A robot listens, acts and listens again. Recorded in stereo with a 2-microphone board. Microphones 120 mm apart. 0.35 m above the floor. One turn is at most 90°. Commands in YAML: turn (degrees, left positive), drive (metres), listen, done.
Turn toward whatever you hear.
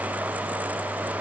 listen: true
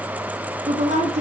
turn: -70
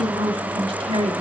turn: -50
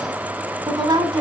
turn: -35
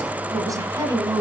turn: -25
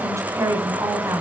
turn: -20
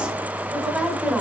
done: "Facing the woman speaking."